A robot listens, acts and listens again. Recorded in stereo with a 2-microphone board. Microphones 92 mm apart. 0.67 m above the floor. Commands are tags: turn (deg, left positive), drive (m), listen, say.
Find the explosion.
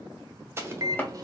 <turn deg="-25"/>
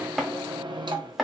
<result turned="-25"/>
<listen/>
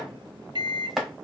<say>I heard an explosion, but can't make it out now. It was about straight ahead or 130° right.</say>